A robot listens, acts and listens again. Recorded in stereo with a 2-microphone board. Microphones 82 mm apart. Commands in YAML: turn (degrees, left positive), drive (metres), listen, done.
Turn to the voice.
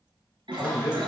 turn: 40
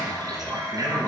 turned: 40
listen: true
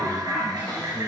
listen: true
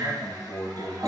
turn: 100
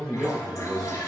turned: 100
done: "Found it: a man speaking, straight ahead, 2 to 4 m away."